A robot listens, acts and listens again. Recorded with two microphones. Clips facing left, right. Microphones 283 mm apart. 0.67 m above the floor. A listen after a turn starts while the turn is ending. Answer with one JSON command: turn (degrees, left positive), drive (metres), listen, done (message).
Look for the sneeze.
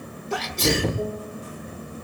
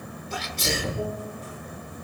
{"turn": 70}
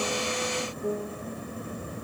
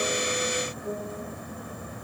{"listen": true}
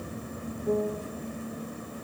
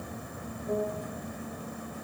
{"done": "I heard a sneeze, but can't make it out now. It was about straight ahead or 40° left."}